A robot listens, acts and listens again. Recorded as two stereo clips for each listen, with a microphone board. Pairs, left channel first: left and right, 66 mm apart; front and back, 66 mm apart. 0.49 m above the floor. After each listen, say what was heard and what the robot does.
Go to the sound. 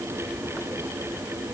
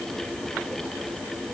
Keep listening.
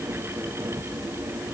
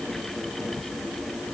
Keep listening.
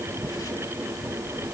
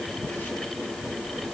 I can't make out anything to turn to.